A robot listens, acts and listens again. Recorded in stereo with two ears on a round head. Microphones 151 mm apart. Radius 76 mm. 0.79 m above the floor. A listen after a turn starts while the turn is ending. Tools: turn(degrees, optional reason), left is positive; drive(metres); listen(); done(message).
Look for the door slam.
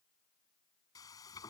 listen()
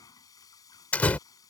turn(degrees=30)
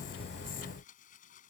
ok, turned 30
listen()
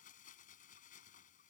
done("I heard a door slam, but can't make it out now. It was about 20° right or 140° left.")